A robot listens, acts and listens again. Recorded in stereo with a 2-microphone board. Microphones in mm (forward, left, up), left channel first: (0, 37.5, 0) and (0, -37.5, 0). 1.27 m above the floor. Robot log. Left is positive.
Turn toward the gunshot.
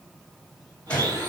note: The gunshot: about 15° left or 165° left.
cmd yaw +15
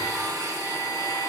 cmd idle
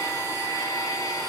end: I heard a gunshot, but can't make it out now. It was about straight ahead or 150° left.